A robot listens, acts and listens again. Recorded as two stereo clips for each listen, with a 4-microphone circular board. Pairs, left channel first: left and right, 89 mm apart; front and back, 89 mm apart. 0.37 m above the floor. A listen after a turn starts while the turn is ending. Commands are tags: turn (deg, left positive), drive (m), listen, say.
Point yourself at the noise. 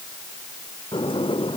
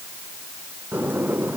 <turn deg="110"/>
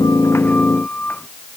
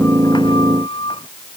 <turn deg="15"/>
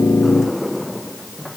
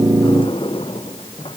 <say>Found it: a sliding door, straight ahead.</say>